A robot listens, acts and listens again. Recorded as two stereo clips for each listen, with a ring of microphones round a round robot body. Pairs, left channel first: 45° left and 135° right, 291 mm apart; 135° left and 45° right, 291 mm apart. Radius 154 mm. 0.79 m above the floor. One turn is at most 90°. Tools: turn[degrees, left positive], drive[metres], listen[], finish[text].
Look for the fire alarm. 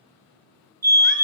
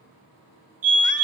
Thought: The fire alarm: 80° right.
Action: turn[-80]
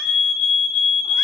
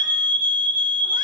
Thought: The fire alarm is now 10° right.
Action: turn[-10]
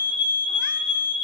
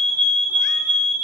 Action: finish[Facing the fire alarm, 2 to 4 m away.]